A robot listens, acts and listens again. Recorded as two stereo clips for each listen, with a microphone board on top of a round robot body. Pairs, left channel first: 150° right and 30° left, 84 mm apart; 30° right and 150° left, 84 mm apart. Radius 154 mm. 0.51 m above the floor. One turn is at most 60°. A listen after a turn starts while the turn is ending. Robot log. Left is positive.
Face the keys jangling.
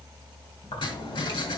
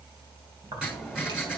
note: The keys jangling: 165° right.
cmd yaw -60
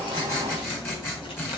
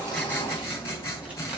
note: The keys jangling is now 135° right.
cmd yaw -60
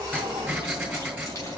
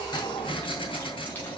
note: The keys jangling is now 100° right.
cmd yaw -60
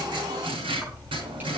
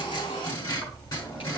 note: The keys jangling is now 40° right.
cmd yaw -40
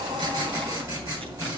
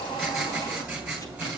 note: The keys jangling is now 20° left.
cmd yaw +20
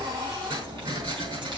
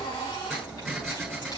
end: Found it: keys jangling, straight ahead.